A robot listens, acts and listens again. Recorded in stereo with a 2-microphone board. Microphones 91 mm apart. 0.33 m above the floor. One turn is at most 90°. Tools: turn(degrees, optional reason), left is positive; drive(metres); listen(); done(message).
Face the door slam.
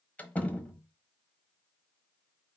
turn(degrees=15, reason="The door slam: about 15° left or 165° left.")
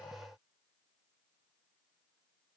listen()
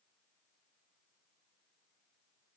done("I heard a door slam, but can't make it out now. It was about straight ahead or 150° left.")